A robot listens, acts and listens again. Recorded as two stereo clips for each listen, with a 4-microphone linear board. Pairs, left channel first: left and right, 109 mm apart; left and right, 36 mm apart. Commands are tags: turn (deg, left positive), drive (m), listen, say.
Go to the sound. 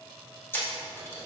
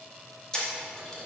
<turn deg="20"/>
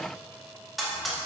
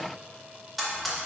<drive m="1.0"/>
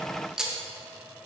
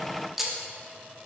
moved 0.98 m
<drive m="1.0"/>
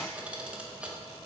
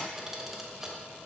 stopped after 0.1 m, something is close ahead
<listen/>
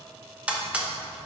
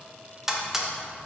<turn deg="-10"/>
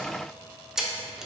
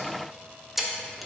<say>I am next to the camera shutter.</say>